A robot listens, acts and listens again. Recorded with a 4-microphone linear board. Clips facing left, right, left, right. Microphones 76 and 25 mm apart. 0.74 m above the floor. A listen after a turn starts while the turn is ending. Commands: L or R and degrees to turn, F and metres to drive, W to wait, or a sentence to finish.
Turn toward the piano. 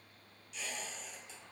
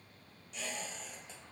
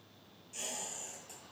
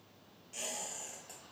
W
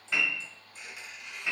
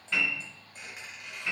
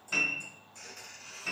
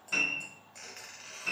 L30
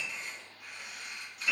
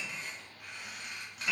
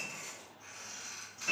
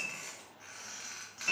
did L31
R25
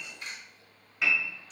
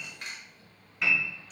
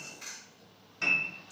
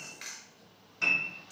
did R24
Facing the piano.